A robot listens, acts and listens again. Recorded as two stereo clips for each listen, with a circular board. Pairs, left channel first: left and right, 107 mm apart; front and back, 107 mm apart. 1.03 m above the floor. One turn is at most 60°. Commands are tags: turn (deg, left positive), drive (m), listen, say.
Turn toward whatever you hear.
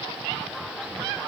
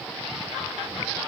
<listen/>
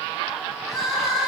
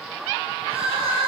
<turn deg="60"/>
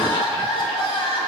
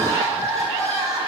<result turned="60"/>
<turn deg="60"/>
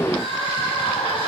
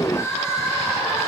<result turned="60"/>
<turn deg="60"/>
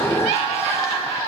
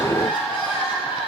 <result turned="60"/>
<turn deg="30"/>
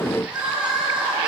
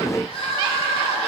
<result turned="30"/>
<turn deg="-10"/>
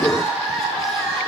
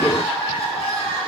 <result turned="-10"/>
<say>Found it: crying, straight ahead, 1 to 2 m away.</say>